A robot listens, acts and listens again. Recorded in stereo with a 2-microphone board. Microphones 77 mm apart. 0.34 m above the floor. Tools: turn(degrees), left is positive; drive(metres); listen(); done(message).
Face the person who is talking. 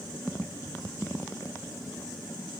listen()
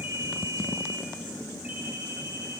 listen()
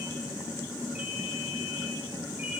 done("I can't make out anyone speaking to turn to.")